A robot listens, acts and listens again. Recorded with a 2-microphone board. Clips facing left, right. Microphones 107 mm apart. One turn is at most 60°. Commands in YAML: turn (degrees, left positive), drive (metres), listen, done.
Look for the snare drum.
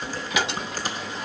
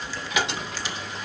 listen: true
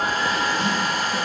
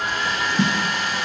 turn: -60
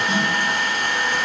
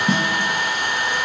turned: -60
turn: -45
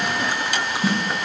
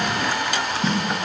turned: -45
turn: 10
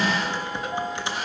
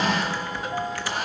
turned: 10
listen: true
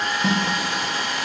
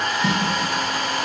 done: "Facing the snare drum."